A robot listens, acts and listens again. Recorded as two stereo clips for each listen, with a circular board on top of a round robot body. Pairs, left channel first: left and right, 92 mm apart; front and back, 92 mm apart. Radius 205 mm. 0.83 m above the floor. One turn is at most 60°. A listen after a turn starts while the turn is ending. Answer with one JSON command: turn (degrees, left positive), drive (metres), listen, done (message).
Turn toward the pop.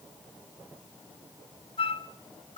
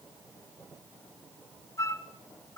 {"listen": true}
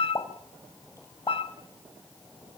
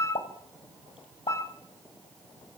{"turn": 30}
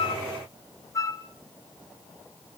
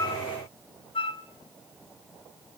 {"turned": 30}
{"done": "Facing where the pop came from. I can't hear it now."}